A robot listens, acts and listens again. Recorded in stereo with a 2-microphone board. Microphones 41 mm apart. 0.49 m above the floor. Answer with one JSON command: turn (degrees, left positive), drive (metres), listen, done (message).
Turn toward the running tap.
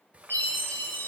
{"turn": -35}
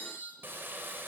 {"turn": -105}
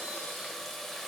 {"done": "Found it: a running tap, straight ahead."}